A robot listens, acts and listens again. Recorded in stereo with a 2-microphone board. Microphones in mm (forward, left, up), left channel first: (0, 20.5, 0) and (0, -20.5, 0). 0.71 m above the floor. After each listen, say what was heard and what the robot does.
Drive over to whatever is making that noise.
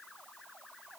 Keep listening.
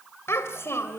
Turn 90° left.
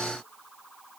Keep listening.
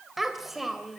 Drive 1.0 m forward.
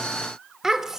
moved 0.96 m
The child speaking is now 10° right. Turn 10° right.
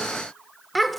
Drive 1.0 m forward.
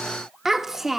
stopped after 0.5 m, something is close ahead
The child speaking is now 10° right. Turn 10° right.
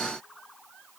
Keep listening.
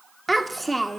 I am next to the child speaking.